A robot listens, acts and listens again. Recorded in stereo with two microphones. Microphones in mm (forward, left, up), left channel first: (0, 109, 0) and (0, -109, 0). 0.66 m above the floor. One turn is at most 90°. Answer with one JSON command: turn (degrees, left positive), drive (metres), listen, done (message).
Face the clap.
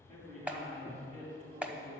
{"turn": -30}
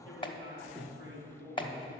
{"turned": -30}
{"turn": 25}
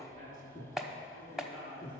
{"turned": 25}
{"done": "Found it: a clap, straight ahead."}